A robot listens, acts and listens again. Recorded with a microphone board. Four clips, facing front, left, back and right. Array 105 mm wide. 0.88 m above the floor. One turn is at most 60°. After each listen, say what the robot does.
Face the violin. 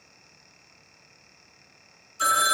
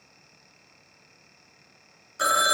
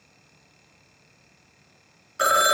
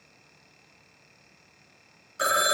Keep listening.
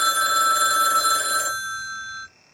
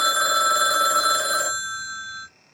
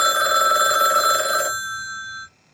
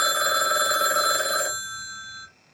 Keep listening.
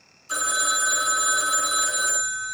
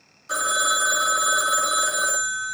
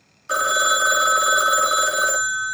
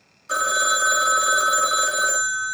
I can't make out a violin, only a phone ringing.